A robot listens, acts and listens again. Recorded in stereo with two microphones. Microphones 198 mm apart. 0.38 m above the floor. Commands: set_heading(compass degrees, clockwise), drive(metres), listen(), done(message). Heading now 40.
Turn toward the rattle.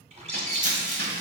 set_heading(80)
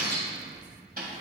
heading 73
listen()
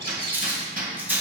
set_heading(83)
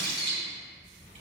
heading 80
listen()
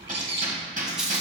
done("Facing the rattle.")